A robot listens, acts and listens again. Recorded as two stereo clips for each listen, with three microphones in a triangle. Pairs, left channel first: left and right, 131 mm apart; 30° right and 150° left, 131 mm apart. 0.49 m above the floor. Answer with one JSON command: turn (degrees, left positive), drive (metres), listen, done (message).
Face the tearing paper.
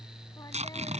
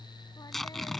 {"turn": -120}
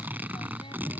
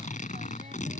{"turn": -15}
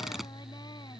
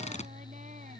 {"done": "Facing the tearing paper."}